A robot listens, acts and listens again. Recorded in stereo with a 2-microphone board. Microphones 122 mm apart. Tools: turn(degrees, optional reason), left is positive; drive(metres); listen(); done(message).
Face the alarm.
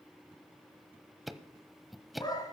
listen()
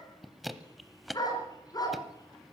listen()
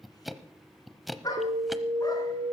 turn(degrees=-55, reason="The alarm: about 55° right or 125° right.")
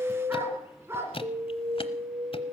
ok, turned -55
turn(degrees=-60, reason="So it is at 60° right.")
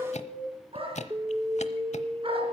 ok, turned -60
turn(degrees=-25, reason="The alarm is now 25° right.")
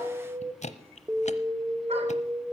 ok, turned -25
turn(degrees=-15, reason="The alarm is now 15° right.")
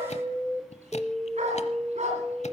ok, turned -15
done("Facing the alarm.")